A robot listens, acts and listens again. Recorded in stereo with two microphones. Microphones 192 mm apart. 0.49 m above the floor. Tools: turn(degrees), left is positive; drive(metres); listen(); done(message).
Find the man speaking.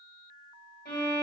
listen()
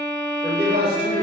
turn(degrees=-60)
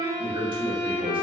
turn(degrees=-30)
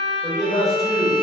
done("Found it: a man speaking, straight ahead.")